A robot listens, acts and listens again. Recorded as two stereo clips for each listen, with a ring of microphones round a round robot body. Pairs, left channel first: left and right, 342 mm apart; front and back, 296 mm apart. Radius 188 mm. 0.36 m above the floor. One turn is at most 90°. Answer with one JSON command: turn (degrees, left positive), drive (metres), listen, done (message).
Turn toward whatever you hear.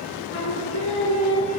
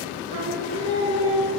{"turn": 90}
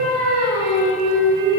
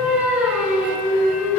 {"turn": 90}
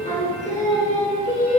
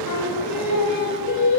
{"turn": 20}
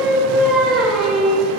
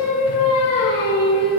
{"done": "Facing the singing, 2 to 4 m away."}